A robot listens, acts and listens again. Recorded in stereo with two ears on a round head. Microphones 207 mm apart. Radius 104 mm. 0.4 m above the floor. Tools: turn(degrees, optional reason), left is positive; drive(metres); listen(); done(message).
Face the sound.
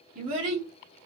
turn(degrees=-35, reason="The child speaking: about 35° right or 145° right.")
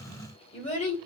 turn(degrees=25, reason="So it is at 25° left.")
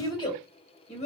turn(degrees=35, reason="The child speaking is now 35° left.")
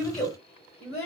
turn(degrees=25, reason="The child speaking is now 25° left.")
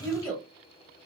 turn(degrees=10, reason="The child speaking is now 10° left.")
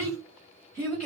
done("Found it: a child speaking, straight ahead, 1 to 2 m away.")